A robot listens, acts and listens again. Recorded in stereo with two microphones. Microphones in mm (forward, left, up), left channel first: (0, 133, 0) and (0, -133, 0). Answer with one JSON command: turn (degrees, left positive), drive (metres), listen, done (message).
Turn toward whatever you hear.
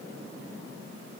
{"listen": true}
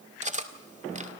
{"turn": -25}
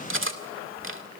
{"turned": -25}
{"turn": -130}
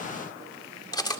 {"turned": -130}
{"turn": 15}
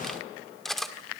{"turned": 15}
{"done": "Found it: cutlery clinking, straight ahead, 1 to 2 m away."}